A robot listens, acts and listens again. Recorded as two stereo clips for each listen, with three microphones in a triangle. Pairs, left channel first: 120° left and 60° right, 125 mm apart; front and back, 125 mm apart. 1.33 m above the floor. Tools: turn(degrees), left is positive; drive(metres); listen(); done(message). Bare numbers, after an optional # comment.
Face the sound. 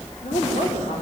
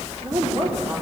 # The woman speaking: 125° left.
turn(125)
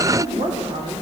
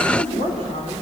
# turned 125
# The woman speaking is now 20° right.
turn(-20)
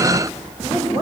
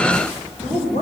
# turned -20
done("Found it: a woman speaking, straight ahead, over 4 m away.")